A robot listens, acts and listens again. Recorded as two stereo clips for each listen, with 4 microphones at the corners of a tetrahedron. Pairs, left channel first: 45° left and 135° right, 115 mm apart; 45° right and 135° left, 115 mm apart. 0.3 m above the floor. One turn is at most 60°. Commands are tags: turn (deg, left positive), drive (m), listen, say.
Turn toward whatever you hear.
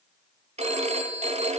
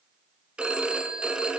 <turn deg="-60"/>
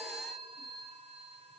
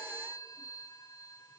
<turn deg="-60"/>
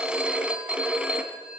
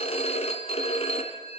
<turn deg="-55"/>
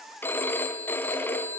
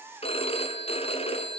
<turn deg="-25"/>
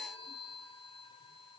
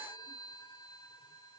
<listen/>
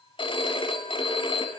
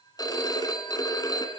<say>Found it: a phone ringing, straight ahead.</say>